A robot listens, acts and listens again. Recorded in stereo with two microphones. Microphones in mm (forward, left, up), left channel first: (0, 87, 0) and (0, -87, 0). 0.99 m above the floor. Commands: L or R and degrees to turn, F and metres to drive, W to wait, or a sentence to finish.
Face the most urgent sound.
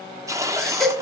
L30
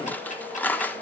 W
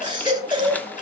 R25
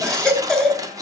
Facing the baby crying.